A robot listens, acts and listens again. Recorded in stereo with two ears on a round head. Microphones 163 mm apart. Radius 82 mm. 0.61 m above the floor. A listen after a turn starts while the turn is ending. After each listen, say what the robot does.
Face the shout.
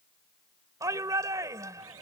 Turn 20° right.
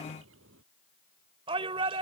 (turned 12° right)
Turn 150° right.
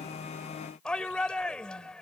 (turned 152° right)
Facing the shout.